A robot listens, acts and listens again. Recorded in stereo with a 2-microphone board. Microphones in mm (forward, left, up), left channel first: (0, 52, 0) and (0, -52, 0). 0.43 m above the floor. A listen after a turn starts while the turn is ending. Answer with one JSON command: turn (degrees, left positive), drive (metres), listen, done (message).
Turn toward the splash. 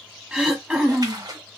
{"turn": -40}
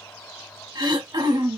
{"listen": true}
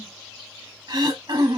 {"done": "I heard a splash, but can't make it out now. It was about straight ahead or 100° right."}